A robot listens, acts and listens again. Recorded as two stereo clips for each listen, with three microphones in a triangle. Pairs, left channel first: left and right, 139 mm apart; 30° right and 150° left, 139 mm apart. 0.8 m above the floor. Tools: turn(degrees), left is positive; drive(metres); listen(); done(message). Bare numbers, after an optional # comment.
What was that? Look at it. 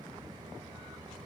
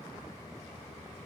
listen()
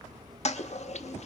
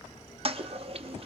# The toilet flushing: 115° left.
turn(115)
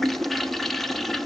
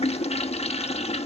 done("Found it: a toilet flushing, straight ahead, under 1 m away.")